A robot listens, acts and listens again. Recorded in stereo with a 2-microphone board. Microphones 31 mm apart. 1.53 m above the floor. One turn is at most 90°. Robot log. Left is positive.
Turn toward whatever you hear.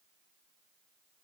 cmd idle
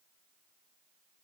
cmd idle
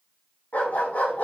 note: The dog barking: about 45° left or 135° left.
cmd yaw +45
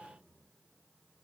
cmd idle
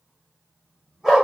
note: So it is at 10° right.
cmd yaw -10
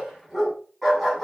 end: Found it: a dog barking, straight ahead.